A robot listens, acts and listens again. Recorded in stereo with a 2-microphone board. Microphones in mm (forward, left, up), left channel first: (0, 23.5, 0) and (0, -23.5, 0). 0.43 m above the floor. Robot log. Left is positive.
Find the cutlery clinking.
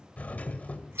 cmd idle
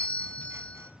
cmd idle
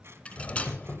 note: The cutlery clinking: about 25° left or 155° left.
cmd yaw +25
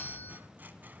cmd idle
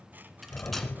cmd idle
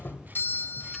end: I heard cutlery clinking, but can't make it out now. It was about straight ahead or 130° left.